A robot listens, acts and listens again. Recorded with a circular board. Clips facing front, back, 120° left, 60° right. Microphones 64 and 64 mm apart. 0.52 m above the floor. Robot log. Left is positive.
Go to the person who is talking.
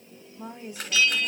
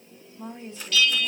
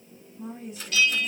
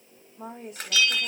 note: The woman speaking: 75° right.
cmd yaw -75
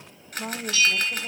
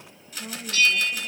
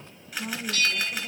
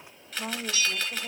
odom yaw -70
cmd fwd 1.0
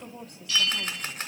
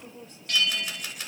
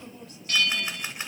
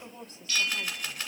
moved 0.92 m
note: The woman speaking is now 10° right.
cmd yaw -10
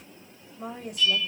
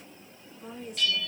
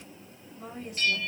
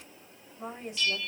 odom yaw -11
cmd fwd 1.0
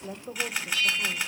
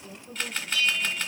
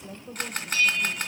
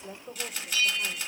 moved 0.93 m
cmd fwd 1.0
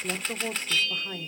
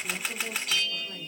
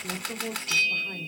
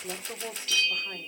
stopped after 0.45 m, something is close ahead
note: The woman speaking is now 15° left.
cmd yaw +15
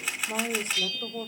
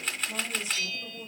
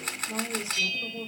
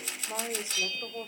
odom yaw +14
end: Arrived at the woman speaking, straight ahead.